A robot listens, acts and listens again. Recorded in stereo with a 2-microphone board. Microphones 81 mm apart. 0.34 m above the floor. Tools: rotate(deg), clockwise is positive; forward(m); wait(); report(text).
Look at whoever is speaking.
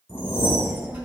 rotate(25)
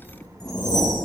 rotate(130)
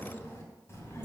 rotate(-35)
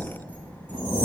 rotate(-25)
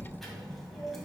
report("Facing the child speaking, 1 to 2 m away.")